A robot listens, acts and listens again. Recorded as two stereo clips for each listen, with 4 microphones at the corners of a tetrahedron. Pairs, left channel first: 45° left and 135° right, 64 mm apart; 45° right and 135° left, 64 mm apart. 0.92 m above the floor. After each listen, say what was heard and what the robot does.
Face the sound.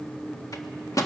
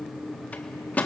The microwave: 20° left. Turn 20° left.
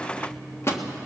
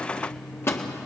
Facing the microwave.